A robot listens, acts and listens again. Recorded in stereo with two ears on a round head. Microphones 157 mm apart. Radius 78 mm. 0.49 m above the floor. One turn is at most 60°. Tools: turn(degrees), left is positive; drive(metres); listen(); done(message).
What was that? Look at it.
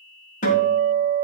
turn(degrees=45)
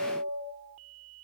turn(degrees=60)
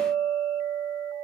turn(degrees=25)
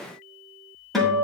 done("Facing the guitar.")